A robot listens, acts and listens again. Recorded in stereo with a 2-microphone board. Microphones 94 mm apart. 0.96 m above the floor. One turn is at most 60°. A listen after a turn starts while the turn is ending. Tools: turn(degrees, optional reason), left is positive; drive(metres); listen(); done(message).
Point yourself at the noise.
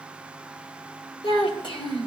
turn(degrees=55, reason="The child speaking: about 55° left or 125° left.")
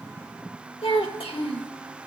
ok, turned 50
turn(degrees=60, reason="So it is at 75° left.")
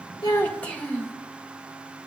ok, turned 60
turn(degrees=15, reason="The child speaking is now 15° left.")
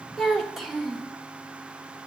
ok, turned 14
done("Facing the child speaking, 1 to 2 m away.")